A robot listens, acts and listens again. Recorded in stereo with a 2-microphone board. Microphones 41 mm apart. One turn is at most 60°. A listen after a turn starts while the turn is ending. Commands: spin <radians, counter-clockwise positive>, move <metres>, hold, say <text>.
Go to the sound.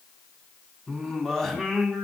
spin 0.52
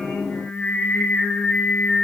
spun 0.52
spin 1.05
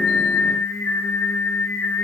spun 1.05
spin 1.05
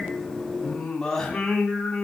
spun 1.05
spin 0.26
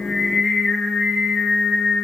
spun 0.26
move 1.0
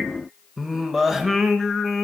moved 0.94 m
spin -0.17
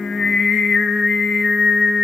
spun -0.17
move 1.0
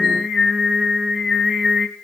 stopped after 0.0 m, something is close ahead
say I am next to the singing.